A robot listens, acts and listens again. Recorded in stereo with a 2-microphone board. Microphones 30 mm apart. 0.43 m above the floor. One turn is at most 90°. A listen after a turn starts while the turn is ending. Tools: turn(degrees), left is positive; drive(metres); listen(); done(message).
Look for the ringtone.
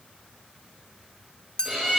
listen()
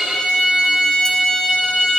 listen()
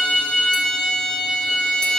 done("I can't make out a ringtone to turn to.")